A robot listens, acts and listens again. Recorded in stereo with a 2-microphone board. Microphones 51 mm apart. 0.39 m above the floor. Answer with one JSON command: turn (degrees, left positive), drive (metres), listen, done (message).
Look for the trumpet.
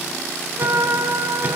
{"turn": -90}
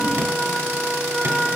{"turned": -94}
{"done": "Found it: a trumpet, straight ahead."}